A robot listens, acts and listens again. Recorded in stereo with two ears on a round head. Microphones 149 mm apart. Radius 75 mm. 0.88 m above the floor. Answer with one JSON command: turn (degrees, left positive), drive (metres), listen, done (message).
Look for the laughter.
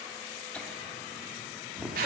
{"turn": -30}
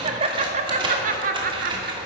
{"turn": -125}
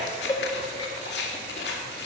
{"turn": 30}
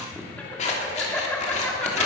{"turn": 10}
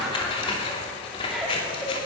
{"done": "Found it: laughter, straight ahead."}